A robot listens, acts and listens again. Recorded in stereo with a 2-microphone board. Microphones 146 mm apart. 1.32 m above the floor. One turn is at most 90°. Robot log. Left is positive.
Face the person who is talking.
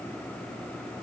cmd idle
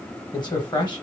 note: The man speaking: about 30° left or 150° left.
cmd yaw +30
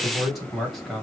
end: Found it: a man speaking, straight ahead, 1 to 2 m away.